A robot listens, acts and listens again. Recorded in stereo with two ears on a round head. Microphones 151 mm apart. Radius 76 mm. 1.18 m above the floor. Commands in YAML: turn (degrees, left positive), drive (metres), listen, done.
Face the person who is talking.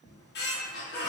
listen: true
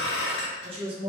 turn: -35
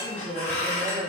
done: "Found it: a woman speaking, straight ahead."